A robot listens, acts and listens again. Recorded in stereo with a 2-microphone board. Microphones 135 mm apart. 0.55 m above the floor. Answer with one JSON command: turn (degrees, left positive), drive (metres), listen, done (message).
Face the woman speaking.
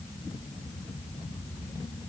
{"listen": true}
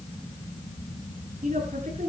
{"turn": -75}
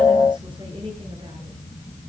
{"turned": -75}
{"listen": true}
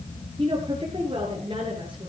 {"turn": -40}
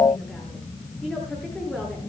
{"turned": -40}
{"done": "Found it: a woman speaking, straight ahead, over 4 m away."}